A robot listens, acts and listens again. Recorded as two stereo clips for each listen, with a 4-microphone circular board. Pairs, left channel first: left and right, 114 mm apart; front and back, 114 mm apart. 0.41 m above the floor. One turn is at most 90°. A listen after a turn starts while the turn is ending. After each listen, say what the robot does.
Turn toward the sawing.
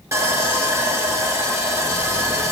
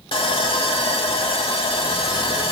Turn 30° right.
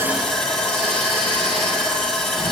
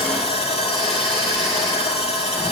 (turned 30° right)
Facing the sawing, 1 to 2 m away.